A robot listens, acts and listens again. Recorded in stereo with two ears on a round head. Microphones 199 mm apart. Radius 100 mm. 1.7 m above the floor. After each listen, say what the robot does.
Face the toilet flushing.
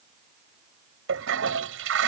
Turn 60° right.
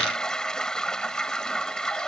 Facing the toilet flushing.